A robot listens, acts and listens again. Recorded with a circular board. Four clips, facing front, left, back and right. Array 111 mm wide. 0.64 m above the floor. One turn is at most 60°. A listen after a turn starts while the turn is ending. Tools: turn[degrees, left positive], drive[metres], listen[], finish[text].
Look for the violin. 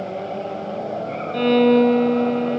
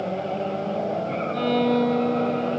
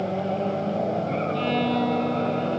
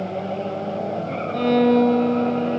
Thought: The violin: 10° right.
Action: turn[-10]
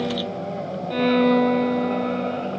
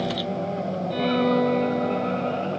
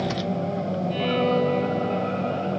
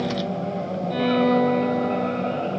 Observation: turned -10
Action: finish[Facing the violin, 1 to 2 m away.]